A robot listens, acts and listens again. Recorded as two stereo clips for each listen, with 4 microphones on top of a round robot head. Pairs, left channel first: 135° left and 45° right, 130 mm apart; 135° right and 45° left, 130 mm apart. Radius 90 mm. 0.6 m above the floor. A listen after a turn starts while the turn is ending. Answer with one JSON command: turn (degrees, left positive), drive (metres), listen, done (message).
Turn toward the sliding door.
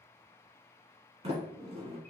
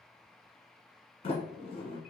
{"turn": -85}
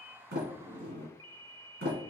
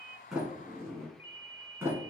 {"turn": -30}
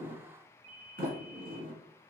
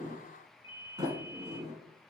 {"turn": -20}
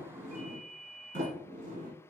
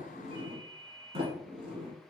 {"done": "Found it: a sliding door, straight ahead."}